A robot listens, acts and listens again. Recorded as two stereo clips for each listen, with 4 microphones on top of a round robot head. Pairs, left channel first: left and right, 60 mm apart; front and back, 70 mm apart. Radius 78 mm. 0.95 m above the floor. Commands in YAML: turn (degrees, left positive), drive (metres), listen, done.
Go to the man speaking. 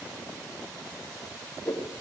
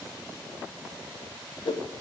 listen: true
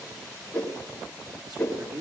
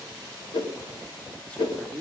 turn: -80
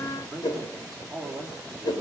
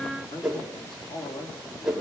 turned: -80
drive: 1.0
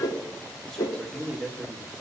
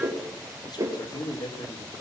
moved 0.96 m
drive: 1.0
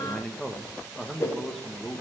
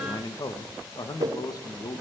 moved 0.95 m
drive: 1.0
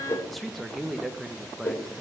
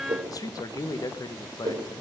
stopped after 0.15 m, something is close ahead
done: "I am next to the man speaking."